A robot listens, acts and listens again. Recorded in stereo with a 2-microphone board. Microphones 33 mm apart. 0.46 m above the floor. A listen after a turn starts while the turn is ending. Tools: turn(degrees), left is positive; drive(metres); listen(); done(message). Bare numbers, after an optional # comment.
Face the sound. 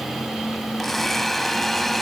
turn(30)
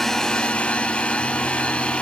# So it is at 140° left.
turn(140)
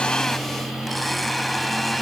done("Facing the blender.")